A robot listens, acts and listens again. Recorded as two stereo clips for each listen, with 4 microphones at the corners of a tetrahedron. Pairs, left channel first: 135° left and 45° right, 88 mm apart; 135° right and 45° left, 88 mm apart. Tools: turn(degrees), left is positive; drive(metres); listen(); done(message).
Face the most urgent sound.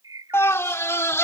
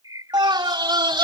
turn(degrees=75)
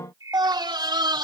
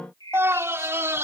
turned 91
turn(degrees=-15)
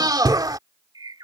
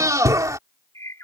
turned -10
done("Facing the scream.")